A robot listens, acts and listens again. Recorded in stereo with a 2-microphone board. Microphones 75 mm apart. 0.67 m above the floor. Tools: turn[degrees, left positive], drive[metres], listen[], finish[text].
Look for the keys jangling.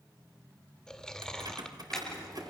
Thought: The keys jangling: about 55° right or 125° right.
Action: turn[-55]
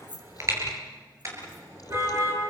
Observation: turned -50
Thought: So it is at 75° right.
Action: turn[-75]
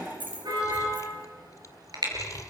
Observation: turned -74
Thought: The keys jangling is now 25° right.
Action: turn[-25]
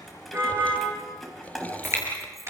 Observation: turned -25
Action: finish[Facing the keys jangling, 2 to 4 m away.]